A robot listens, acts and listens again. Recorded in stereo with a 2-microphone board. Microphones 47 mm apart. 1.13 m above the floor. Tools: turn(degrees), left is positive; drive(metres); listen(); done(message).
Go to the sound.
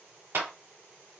turn(degrees=-70)
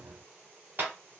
turn(degrees=-40)
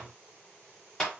turn(degrees=15)
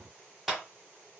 drive(metres=1.0)
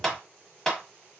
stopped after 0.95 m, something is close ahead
turn(degrees=10)
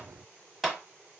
done("Arrived at the clap, straight ahead.")